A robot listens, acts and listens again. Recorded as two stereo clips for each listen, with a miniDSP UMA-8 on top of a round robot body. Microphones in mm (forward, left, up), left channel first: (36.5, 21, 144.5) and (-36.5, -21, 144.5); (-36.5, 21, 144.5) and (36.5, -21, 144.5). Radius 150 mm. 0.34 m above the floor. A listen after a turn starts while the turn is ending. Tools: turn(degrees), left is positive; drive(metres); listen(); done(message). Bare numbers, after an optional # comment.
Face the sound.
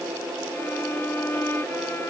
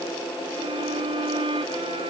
# The violin: 35° right.
turn(-35)
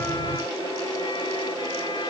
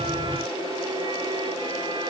listen()
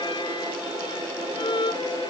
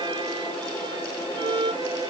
done("Found it: a violin, straight ahead.")